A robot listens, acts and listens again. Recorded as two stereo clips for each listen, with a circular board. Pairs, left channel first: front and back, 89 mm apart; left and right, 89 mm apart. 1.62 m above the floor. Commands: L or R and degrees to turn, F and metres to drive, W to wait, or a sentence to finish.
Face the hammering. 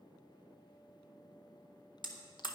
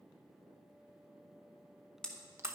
L10
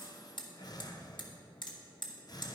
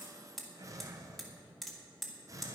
Facing the hammering, 1 to 2 m away.